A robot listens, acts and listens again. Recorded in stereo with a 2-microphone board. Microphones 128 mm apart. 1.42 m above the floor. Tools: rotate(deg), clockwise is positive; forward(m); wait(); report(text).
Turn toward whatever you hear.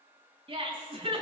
rotate(45)
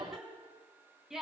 report("Found it: laughter, straight ahead, over 4 m away.")